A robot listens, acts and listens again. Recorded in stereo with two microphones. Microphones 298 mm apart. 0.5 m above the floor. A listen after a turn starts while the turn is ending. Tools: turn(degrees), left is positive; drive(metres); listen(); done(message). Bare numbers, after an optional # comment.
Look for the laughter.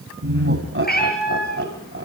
# The laughter: about 40° right or 140° right.
turn(-40)
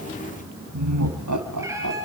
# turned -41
# So it is at 100° right.
turn(-100)
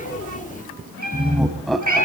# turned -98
done("Facing the laughter, 2 to 4 m away.")